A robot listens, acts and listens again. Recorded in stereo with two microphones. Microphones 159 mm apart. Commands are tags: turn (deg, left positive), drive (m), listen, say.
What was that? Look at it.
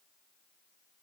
<listen/>
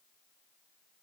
<listen/>
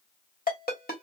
<turn deg="65"/>
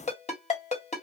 <turn deg="45"/>
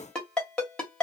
<say>Facing the ringtone.</say>